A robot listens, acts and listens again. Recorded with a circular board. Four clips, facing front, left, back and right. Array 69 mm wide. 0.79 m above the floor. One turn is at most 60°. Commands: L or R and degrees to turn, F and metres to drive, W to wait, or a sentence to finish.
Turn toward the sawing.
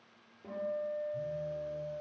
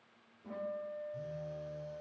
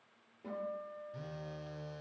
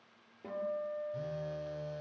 W
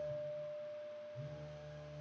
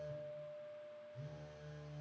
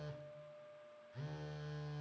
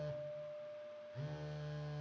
W
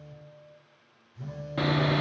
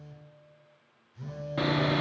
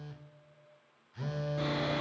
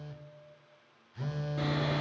L40
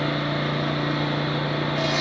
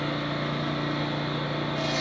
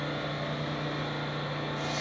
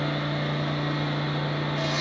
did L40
Facing the sawing.